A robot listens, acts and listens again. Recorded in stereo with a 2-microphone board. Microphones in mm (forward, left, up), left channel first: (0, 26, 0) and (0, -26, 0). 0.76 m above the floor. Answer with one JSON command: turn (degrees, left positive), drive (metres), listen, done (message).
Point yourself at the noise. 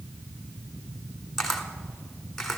{"turn": 30}
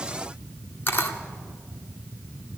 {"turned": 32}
{"turn": 140}
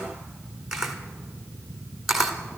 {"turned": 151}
{"turn": -10}
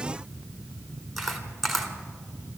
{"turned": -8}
{"done": "Facing the camera shutter, 1 to 2 m away."}